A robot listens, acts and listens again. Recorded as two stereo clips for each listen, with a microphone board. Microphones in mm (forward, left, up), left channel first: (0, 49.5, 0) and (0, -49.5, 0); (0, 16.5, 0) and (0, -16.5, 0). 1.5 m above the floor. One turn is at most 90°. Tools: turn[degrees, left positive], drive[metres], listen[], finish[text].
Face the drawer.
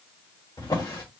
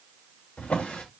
Thought: The drawer: about 40° left or 140° left.
Action: turn[40]
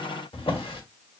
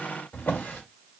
Thought: So it is at 90° left.
Action: turn[90]
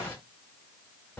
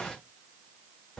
Thought: The drawer is now 25° left.
Action: turn[25]
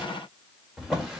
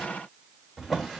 Action: finish[Facing the drawer, 1 to 2 m away.]